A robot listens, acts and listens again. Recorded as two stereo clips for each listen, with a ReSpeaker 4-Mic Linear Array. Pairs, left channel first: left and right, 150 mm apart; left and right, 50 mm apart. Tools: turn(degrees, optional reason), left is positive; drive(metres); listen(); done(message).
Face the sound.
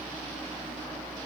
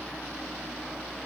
listen()
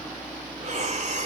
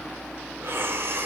turn(degrees=-50, reason="The breathing: about 50° right or 130° right.")
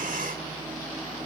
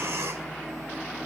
listen()
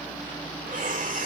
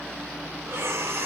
turn(degrees=-75, reason="So it is at 75° right.")
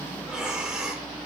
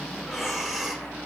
done("Found it: breathing, straight ahead.")